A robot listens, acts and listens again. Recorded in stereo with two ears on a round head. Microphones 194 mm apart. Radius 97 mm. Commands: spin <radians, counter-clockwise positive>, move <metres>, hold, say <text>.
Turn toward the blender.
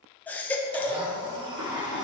spin -0.35
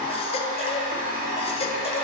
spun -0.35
spin -2.44
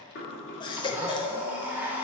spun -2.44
spin -0.17
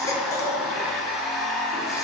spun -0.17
say Found it: a blender, straight ahead, 1 to 2 m away.